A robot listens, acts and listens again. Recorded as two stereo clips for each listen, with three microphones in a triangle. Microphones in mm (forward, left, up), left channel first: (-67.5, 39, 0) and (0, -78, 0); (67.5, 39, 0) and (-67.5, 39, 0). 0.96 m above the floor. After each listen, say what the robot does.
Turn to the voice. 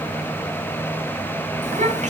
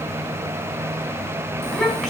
Turn 90° right.
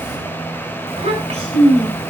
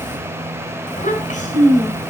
Turn 25° right.
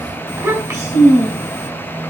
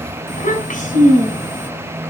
Turn 10° left.
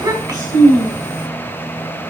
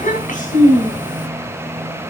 Facing the child speaking.